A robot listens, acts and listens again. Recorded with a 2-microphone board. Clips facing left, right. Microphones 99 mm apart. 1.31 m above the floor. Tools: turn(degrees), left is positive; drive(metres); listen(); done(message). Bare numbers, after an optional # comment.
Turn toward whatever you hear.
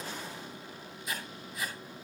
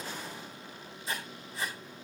# The writing: about 30° right or 150° right.
turn(-30)
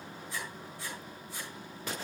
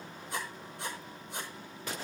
# So it is at 120° right.
turn(-120)
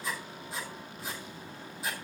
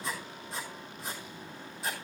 done("Found it: writing, straight ahead.")